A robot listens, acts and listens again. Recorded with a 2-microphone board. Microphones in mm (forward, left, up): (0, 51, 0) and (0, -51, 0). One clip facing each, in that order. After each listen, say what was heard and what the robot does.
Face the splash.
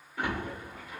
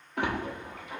Turn 90° right.
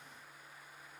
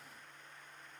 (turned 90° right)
I heard a splash from this way, but can't make it out now.